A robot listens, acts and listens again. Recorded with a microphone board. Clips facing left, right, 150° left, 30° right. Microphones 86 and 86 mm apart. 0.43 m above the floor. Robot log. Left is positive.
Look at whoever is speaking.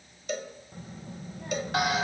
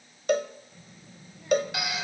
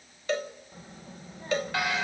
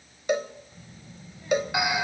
note: The child speaking: 115° left.
cmd yaw +115
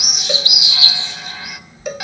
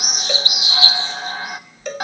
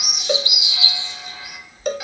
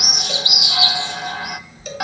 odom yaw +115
note: The child speaking is now 30° left.
cmd yaw +30
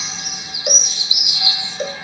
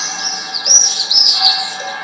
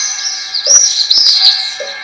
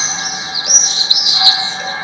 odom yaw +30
cmd idle
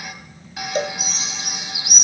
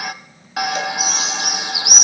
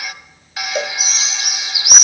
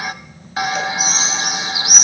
note: The child speaking is now 10° right.
cmd yaw -10
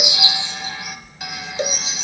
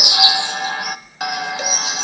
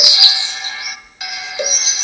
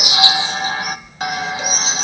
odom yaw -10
end: Found it: a child speaking, straight ahead.